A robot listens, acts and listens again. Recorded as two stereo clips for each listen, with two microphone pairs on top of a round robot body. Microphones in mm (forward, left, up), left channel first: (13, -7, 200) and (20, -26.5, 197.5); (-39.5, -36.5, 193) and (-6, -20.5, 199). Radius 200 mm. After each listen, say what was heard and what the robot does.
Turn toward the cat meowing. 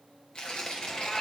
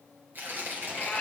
The cat meowing: 145° left. Turn 145° left.
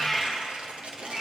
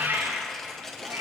The cat meowing is now 10° left. Turn 10° left.
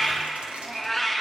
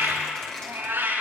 The cat meowing is now 10° left. Turn 10° left.
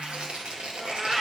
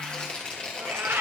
Facing the cat meowing.